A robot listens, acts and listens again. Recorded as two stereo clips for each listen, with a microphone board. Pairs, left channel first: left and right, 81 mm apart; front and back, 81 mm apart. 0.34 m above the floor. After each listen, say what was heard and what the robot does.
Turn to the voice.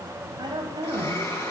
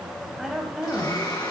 The woman speaking: 95° right. Turn 95° right.
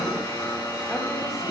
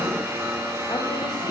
Keep listening.
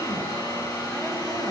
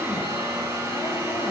Keep listening.
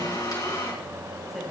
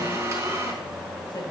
Facing where the woman speaking came from. I can't hear it now.